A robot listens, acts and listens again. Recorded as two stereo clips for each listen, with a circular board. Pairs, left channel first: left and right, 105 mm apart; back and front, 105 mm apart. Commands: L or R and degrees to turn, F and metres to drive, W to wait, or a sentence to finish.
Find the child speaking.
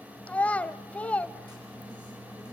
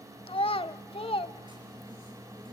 L165
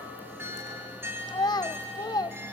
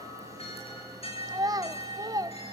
L45
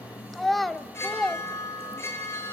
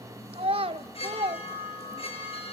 Found it: a child speaking, straight ahead.